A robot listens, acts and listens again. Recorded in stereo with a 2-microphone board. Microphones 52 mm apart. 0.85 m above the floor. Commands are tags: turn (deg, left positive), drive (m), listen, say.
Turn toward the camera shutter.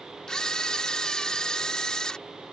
<turn deg="30"/>
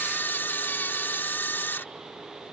<turn deg="135"/>
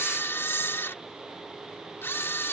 <turn deg="55"/>
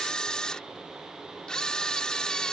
<turn deg="15"/>
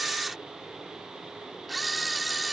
<say>Found it: a camera shutter, straight ahead.</say>